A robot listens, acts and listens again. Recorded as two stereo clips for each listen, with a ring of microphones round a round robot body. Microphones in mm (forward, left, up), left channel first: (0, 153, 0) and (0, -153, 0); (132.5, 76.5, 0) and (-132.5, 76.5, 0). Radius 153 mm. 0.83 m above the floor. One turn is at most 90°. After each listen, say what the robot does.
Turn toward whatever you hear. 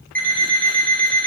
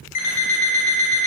Facing the alarm clock, 2 to 4 m away.